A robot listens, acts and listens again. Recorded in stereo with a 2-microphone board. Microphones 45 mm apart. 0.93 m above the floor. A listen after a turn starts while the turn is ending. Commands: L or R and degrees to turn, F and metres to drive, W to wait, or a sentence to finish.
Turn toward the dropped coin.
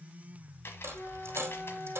R75
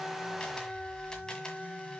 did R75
W
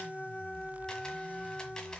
I heard a dropped coin, but can't make it out now. It was about straight ahead or 30° right.